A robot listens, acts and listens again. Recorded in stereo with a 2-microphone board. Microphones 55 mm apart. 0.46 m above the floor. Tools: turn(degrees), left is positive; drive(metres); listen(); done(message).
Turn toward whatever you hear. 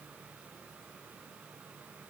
listen()
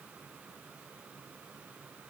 listen()
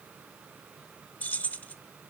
turn(degrees=30)
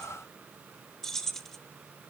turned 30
turn(degrees=10)
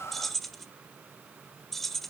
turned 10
done("Facing the keys jangling, under 1 m away.")